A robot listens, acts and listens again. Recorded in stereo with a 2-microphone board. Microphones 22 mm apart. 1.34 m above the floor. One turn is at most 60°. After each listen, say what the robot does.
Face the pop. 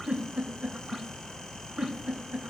Keep listening.
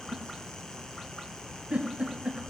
Keep listening.
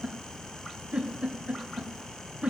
I can't make out a pop to turn to.